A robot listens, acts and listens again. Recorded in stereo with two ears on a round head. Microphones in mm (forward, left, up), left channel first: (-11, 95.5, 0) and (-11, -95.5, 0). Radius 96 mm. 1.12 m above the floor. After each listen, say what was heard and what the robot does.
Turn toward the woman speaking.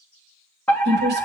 The woman speaking: about 50° right or 130° right. Turn 50° right.
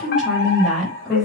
Facing the woman speaking.